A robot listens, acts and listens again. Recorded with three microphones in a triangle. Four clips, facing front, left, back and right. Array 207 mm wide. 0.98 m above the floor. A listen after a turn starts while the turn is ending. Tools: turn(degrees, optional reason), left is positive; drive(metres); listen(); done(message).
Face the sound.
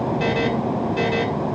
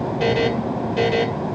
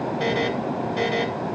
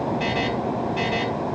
turn(degrees=90, reason="The buzzer: 90° left.")
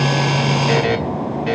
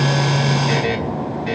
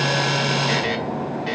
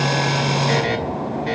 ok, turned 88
done("Found it: a buzzer, straight ahead, 2 to 4 m away.")